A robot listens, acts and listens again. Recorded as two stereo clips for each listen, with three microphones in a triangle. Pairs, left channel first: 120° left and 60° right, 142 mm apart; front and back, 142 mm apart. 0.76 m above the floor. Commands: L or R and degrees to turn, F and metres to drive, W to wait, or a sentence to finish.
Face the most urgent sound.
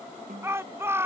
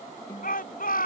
L15
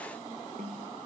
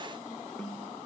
W
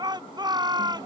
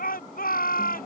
Found it: a shout, straight ahead.